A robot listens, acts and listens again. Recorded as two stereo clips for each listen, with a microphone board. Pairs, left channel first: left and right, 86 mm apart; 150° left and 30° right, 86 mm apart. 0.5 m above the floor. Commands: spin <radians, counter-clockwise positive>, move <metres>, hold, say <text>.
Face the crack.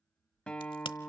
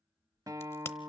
spin 1.57
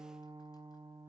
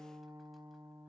say I heard a crack from this way, but can't make it out now.